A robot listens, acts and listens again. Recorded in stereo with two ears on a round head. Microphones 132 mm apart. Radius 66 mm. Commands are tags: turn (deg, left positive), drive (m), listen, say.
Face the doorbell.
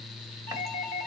<turn deg="65"/>
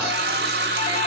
<listen/>
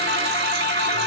<listen/>
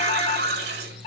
<turn deg="50"/>
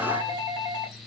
<turn deg="-25"/>
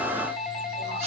<say>Facing the doorbell, 2 to 4 m away.</say>